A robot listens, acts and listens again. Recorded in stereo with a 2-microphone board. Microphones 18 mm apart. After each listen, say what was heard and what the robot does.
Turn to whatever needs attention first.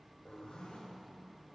Keep listening.
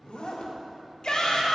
The shout: about 50° left or 130° left. Turn 50° left.
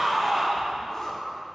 Facing the shout, 2 to 4 m away.